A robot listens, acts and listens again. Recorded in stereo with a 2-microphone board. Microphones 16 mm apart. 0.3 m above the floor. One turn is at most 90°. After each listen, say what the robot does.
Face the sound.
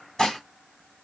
Turn 35° left.
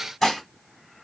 Found it: dishes clattering, straight ahead, 1 to 2 m away.